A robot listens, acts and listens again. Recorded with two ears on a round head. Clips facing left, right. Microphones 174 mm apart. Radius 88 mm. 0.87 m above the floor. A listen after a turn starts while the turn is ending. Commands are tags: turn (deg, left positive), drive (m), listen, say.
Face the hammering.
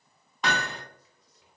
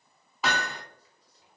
<turn deg="-30"/>
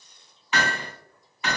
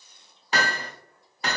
<turn deg="-145"/>
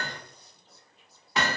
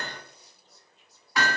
<turn deg="20"/>
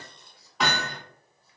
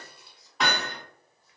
<say>Found it: hammering, straight ahead.</say>